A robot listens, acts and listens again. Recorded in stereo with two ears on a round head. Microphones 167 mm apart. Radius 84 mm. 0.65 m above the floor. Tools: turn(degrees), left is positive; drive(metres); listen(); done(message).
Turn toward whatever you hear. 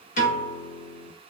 turn(degrees=40)
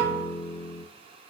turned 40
turn(degrees=95)
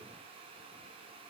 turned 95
listen()
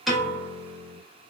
done("Found it: a piano, straight ahead.")